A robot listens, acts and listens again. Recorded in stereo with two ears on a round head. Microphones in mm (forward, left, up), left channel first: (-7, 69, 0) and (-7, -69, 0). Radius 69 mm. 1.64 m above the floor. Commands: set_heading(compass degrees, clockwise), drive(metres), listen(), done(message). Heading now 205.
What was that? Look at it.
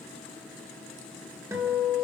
set_heading(225)
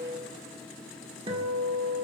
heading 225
set_heading(5)
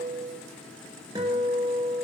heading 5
set_heading(30)
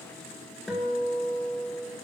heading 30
done("Facing the guitar, 1 to 2 m away.")